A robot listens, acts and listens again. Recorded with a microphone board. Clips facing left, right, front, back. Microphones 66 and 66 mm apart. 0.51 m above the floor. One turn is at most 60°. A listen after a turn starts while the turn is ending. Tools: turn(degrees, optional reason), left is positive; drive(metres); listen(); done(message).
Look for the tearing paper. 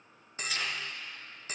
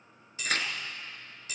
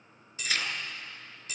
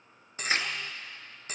turn(degrees=-60, reason="The tearing paper: 120° right.")
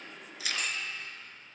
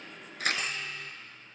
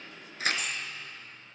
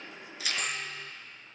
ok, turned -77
turn(degrees=-45, reason="The tearing paper is now 45° right.")
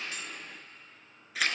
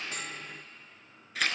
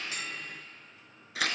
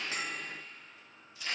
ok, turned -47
done("Found it: tearing paper, straight ahead.")